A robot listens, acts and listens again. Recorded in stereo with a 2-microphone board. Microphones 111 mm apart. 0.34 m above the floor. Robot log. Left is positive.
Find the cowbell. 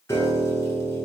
cmd idle
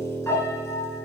cmd idle
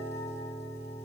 end: I can't make out a cowbell to turn to.